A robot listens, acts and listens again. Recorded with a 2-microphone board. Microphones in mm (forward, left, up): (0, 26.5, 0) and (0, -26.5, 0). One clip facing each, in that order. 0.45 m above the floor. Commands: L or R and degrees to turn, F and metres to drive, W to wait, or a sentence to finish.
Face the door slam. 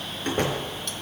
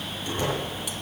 L50
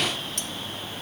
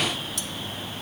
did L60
W
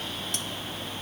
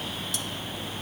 I heard a door slam, but can't make it out now. It was about 10° right or 70° left.